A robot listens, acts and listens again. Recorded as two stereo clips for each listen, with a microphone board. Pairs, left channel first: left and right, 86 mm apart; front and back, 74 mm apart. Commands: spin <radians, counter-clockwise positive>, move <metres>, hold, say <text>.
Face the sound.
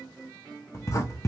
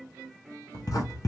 spin 0.61
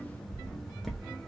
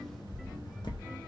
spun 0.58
say Found it: writing, straight ahead, under 1 m away.